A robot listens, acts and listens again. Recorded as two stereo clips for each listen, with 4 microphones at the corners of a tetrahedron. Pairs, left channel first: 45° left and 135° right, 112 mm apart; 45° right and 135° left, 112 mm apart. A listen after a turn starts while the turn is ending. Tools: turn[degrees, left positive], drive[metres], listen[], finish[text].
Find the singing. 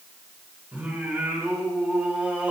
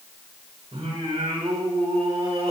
Thought: The singing: 150° left.
Action: turn[150]
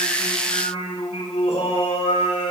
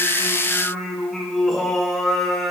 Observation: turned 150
Thought: The singing is now 40° left.
Action: turn[40]
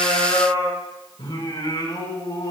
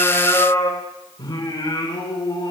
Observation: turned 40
Action: finish[Found it: singing, straight ahead, over 4 m away.]